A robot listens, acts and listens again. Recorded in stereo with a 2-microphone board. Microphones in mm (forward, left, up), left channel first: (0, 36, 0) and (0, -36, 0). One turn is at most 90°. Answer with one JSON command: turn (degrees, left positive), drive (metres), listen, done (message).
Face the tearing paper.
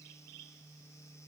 {"listen": true}
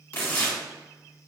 {"turn": 25}
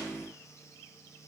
{"listen": true}
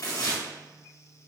{"turn": 90}
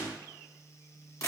{"turn": 50}
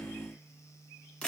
{"turn": 15}
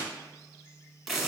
{"done": "Found it: tearing paper, straight ahead."}